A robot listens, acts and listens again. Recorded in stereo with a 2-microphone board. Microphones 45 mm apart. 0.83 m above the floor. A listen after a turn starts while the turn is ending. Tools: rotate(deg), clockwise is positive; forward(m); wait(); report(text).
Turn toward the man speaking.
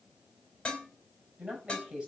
rotate(20)
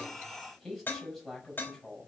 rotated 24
report("Facing the man speaking, over 4 m away.")